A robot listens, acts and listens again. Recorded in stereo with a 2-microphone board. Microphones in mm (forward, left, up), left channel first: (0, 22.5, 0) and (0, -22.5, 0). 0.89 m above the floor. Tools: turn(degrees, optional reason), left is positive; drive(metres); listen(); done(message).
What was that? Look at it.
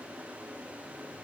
listen()
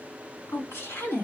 turn(degrees=70, reason="The woman speaking: about 70° left or 110° left.")
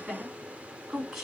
done("Facing the woman speaking, 2 to 4 m away.")